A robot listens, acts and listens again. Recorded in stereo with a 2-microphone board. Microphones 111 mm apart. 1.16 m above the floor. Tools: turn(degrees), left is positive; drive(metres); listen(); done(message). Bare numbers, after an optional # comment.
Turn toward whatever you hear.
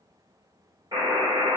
# The buzzer: about 40° right or 140° right.
turn(-40)
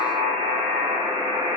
# So it is at 90° right.
turn(-90)
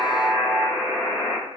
# The buzzer is now 35° left.
turn(35)
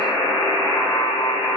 # The buzzer is now 25° left.
turn(25)
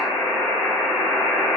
done("Found it: a buzzer, straight ahead, 1 to 2 m away.")